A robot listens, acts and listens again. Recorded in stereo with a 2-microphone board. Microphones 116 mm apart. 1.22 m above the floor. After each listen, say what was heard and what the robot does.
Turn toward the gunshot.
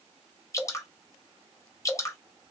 Keep listening.
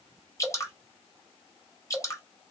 Keep listening.
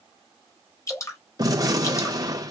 The gunshot: about 30° right or 150° right. Turn 30° right.
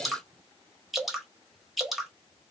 Keep listening.
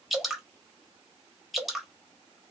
I heard a gunshot, but can't make it out now. It was about straight ahead or 120° right.